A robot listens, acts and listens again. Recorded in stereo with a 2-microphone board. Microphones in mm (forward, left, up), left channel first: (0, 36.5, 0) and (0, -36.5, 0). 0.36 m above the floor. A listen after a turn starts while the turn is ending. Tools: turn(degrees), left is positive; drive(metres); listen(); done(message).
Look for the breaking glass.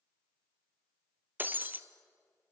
turn(degrees=-25)
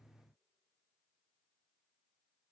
listen()
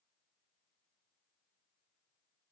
done("I heard breaking glass, but can't make it out now. It was about straight ahead or 130° right.")